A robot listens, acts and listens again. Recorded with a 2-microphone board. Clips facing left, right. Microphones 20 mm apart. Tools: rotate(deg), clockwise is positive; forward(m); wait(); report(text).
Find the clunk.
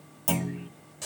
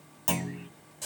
rotate(20)
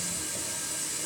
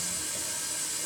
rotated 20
wait()
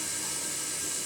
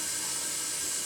report("I heard a clunk, but can't make it out now. It was about straight ahead or 140° right.")